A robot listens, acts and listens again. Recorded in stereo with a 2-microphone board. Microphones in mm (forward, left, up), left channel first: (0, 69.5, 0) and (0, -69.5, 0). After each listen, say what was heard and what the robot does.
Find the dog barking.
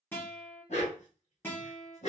The dog barking: about 50° left or 130° left. Turn 50° left.
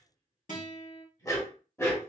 So it is at 15° left. Turn 15° left.
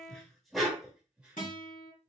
Found it: a dog barking, straight ahead, 1 to 2 m away.